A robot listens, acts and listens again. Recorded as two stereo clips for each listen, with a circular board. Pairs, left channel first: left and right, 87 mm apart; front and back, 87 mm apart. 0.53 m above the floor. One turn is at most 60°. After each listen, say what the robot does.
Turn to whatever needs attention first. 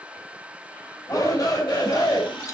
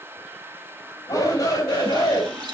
Turn 45° left.
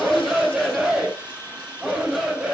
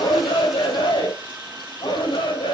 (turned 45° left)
Facing the shout.